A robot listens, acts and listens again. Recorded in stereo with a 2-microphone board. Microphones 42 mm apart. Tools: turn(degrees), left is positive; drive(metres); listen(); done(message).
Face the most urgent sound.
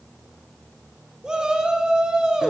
turn(degrees=-20)
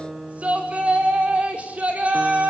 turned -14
turn(degrees=-145)
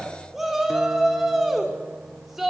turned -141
done("Facing the shout, over 4 m away.")